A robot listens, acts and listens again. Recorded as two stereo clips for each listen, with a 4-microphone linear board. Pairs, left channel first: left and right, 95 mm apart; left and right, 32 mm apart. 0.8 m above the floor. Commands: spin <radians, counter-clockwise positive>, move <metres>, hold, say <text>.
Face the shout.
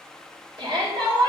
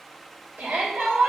spin -1.13
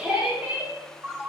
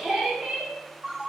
spin -0.26
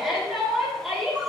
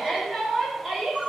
say Found it: a shout, straight ahead.